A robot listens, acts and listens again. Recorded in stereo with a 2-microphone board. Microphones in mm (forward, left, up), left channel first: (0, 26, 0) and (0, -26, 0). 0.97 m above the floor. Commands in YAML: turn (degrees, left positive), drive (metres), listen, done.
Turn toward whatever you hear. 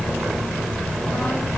listen: true
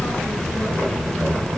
listen: true
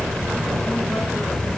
done: "I can't make out anything."